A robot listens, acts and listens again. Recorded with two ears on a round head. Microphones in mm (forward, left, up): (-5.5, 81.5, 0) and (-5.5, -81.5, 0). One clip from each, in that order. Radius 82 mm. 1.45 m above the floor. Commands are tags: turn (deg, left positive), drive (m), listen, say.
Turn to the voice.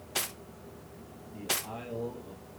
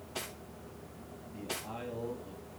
<turn deg="-30"/>
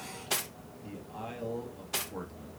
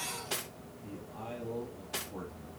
<turn deg="30"/>
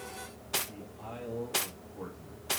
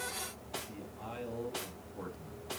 <turn deg="-20"/>
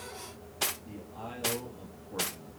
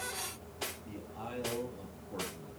<say>Found it: a man speaking, straight ahead, 2 to 4 m away.</say>